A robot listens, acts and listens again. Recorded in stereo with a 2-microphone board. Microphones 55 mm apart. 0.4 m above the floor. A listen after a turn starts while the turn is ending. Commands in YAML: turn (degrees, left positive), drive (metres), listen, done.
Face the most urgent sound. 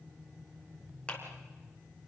listen: true
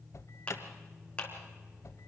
turn: 65
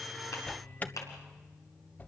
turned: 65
turn: 35
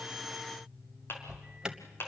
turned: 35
turn: -15
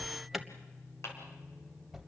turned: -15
done: "Facing the alarm."